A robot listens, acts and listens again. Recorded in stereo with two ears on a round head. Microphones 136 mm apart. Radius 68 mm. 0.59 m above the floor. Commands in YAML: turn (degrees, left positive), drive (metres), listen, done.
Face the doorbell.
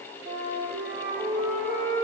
listen: true
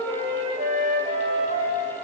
listen: true
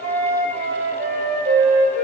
done: "I can't make out a doorbell to turn to."